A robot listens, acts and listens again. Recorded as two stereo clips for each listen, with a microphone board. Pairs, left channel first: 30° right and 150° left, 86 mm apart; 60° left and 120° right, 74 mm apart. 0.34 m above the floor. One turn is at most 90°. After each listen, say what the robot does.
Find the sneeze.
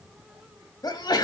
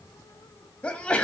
Turn 10° right.
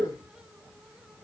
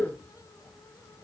Facing the sneeze.